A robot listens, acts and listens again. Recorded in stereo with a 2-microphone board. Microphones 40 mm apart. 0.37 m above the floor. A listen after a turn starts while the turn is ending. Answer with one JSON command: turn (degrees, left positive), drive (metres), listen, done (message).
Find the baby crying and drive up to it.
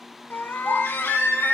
{"turn": 90}
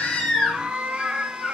{"drive": 1.0}
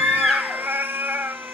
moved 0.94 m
{"drive": 1.0}
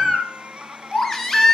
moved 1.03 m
{"turn": 10}
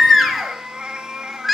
{"drive": 1.0}
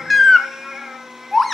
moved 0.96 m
{"drive": 1.0}
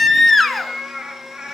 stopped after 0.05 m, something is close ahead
{"done": "I am next to the baby crying."}